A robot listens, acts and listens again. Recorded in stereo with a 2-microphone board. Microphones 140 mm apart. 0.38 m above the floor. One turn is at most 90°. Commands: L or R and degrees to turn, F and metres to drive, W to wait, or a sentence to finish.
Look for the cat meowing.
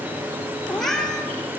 L30
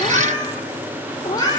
L90
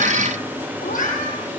L85
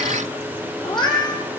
L30
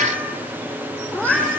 L10
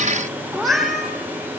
Facing the cat meowing.